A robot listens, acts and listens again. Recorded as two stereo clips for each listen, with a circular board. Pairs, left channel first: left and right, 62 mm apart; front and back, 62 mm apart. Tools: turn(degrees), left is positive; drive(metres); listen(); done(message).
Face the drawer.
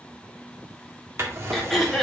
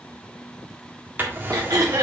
turn(degrees=-125)
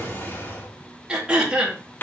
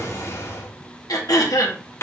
turn(degrees=40)
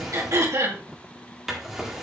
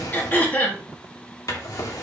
done("Found it: a drawer, straight ahead.")